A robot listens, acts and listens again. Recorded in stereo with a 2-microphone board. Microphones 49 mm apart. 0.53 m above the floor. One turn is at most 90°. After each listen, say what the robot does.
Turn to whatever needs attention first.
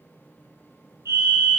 Turn 65° right.
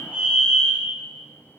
Turn 35° right.
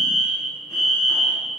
Facing the fire alarm, over 4 m away.